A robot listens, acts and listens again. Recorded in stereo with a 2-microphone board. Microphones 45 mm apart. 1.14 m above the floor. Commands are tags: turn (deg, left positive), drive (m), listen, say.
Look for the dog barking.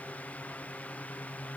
<listen/>
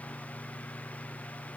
<listen/>
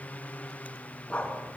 <turn deg="30"/>
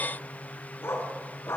<turn deg="110"/>
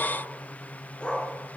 <turn deg="25"/>
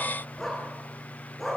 <say>Found it: a dog barking, straight ahead.</say>